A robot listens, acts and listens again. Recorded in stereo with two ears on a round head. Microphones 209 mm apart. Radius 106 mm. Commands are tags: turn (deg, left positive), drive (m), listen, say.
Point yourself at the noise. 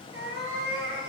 <turn deg="-60"/>
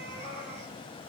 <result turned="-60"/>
<turn deg="-45"/>
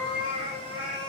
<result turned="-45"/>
<turn deg="10"/>
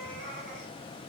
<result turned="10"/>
<say>Facing the cat meowing.</say>